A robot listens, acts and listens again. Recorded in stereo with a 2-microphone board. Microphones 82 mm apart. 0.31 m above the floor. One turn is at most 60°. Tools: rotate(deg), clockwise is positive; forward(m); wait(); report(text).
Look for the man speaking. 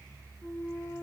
wait()
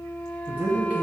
rotate(20)
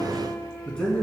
rotate(-15)
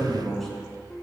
report("Found it: a man speaking, straight ahead.")